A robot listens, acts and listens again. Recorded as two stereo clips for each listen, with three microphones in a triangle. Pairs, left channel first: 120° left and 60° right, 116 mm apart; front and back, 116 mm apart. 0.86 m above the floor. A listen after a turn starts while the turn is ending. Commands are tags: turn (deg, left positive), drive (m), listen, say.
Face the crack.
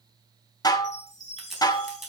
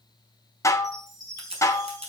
<turn deg="-150"/>
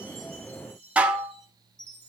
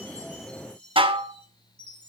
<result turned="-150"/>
<say>I heard a crack from this way, but can't make it out now.</say>